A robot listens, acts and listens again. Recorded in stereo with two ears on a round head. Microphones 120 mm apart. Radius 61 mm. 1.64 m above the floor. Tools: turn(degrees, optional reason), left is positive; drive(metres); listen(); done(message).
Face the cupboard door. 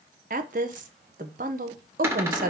turn(degrees=-20, reason="The cupboard door: about 20° right or 160° right.")
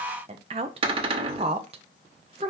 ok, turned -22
turn(degrees=-140, reason="So it is at 140° right.")
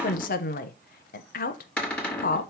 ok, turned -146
done("Facing the cupboard door.")